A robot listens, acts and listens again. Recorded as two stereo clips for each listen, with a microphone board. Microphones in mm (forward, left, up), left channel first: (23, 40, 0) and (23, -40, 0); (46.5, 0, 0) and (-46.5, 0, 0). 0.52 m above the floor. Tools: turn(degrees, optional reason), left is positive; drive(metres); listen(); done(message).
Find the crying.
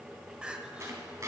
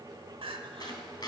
turn(degrees=-170, reason="The crying: 170° right.")
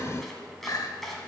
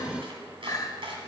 turn(degrees=50, reason="The crying is now 50° left.")
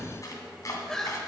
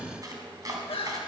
done("Facing the crying.")